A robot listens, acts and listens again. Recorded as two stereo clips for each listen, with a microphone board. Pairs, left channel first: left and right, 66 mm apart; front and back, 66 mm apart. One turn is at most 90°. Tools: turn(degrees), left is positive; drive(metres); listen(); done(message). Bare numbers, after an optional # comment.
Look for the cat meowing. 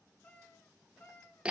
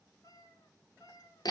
# The cat meowing: 35° left.
turn(35)
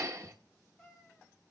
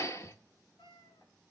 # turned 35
done("Facing the cat meowing, over 4 m away.")